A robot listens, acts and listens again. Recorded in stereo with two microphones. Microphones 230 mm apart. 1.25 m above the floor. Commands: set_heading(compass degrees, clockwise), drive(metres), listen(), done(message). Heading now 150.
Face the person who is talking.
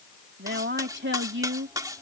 set_heading(210)
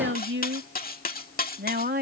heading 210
set_heading(250)
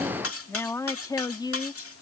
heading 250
set_heading(230)
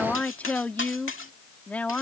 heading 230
done("Found it: a woman speaking, straight ahead.")